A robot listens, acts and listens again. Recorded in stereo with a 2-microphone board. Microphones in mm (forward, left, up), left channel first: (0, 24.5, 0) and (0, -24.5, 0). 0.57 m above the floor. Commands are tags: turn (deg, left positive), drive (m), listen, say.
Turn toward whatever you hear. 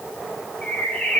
<turn deg="25"/>
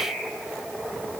<say>Found it: a bird, straight ahead.</say>